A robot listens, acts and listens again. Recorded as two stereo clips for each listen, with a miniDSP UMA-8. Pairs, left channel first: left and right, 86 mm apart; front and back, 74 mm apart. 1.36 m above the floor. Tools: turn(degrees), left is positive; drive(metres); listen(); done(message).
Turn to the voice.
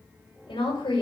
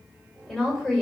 turn(degrees=80)
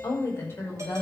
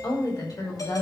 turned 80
turn(degrees=25)
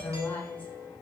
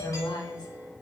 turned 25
turn(degrees=20)
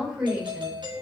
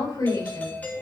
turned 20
turn(degrees=-10)
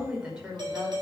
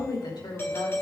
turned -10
turn(degrees=-10)
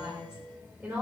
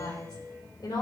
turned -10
turn(degrees=-15)
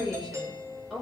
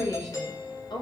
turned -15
done("Found it: a woman speaking, straight ahead.")